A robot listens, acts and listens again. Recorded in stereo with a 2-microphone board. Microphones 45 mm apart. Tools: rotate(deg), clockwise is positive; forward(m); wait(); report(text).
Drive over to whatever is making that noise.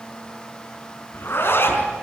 rotate(-55)
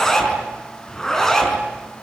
rotate(-10)
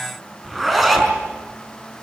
forward(1.0)
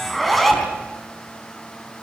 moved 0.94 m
forward(1.0)
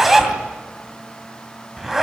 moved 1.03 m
forward(1.0)
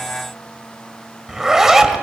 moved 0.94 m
rotate(10)
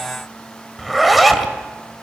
forward(1.0)
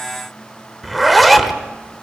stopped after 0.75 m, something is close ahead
report("Arrived at the zipper, straight ahead.")